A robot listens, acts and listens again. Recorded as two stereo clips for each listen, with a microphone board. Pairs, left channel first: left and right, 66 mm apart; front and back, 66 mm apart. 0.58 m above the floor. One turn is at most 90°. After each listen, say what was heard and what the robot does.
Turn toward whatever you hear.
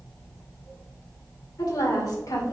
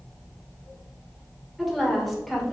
The woman speaking: 90° left. Turn 90° left.
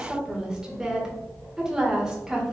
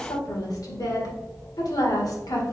The woman speaking is now 10° right. Turn 10° right.
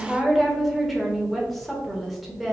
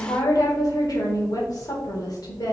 Facing the woman speaking.